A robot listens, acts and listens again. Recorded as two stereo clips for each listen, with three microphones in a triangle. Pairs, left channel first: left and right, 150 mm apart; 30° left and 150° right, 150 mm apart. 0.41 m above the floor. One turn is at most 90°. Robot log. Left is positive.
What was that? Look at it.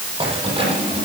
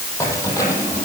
note: The keys jangling: 35° right.
cmd yaw -35
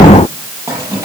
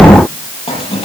note: The keys jangling is now 20° right.
cmd yaw -20
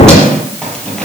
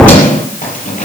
end: Found it: keys jangling, straight ahead.